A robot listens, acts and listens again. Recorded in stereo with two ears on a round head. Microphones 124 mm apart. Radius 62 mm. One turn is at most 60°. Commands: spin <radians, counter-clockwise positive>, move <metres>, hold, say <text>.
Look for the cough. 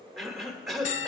spin 0.52
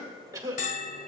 spin -0.52
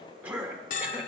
spin -0.17
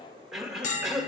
say Facing the cough.